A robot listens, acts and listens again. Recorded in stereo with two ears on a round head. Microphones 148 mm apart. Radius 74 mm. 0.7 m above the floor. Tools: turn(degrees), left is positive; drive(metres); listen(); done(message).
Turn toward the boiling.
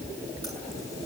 listen()
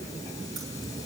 listen()
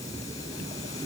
done("I can't make out boiling to turn to.")